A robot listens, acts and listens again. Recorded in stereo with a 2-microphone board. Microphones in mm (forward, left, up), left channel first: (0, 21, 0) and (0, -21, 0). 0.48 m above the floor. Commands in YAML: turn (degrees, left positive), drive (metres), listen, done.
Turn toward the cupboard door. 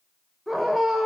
listen: true
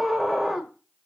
listen: true
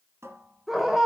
turn: -90
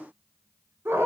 listen: true
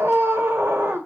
listen: true
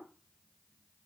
done: "Facing where the cupboard door came from. I can't hear it now."